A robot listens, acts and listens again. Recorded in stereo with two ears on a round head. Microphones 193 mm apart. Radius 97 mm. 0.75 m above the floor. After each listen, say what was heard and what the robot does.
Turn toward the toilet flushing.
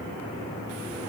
Keep listening.
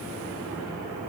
Keep listening.
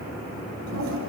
Turn 90° right.
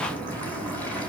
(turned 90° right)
So it is at 10° left. Turn 10° left.
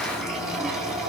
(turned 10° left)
Found it: a toilet flushing, straight ahead, over 4 m away.